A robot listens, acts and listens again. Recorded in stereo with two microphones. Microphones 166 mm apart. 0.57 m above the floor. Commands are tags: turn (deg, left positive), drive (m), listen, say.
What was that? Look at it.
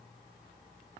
<listen/>
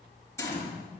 <turn deg="15"/>
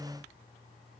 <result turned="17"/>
<listen/>
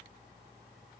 <say>I heard a gunshot, but can't make it out now. It was about straight ahead or 150° left.</say>